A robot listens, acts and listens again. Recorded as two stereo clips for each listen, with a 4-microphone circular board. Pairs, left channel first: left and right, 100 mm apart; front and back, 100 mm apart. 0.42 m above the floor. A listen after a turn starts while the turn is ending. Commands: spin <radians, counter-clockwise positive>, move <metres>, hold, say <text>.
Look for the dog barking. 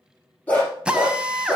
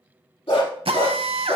spin 0.26
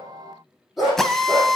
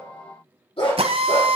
say Found it: a dog barking, straight ahead, over 4 m away.